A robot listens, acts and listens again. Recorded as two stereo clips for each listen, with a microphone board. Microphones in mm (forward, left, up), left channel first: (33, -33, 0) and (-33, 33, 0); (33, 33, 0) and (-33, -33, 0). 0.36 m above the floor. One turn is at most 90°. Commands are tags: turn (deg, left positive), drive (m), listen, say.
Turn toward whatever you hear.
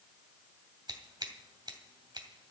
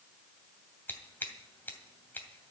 <turn deg="90"/>
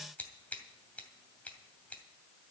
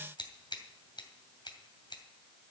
<turn deg="25"/>
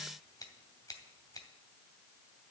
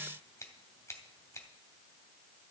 <say>Found it: scissors, straight ahead, 2 to 4 m away.</say>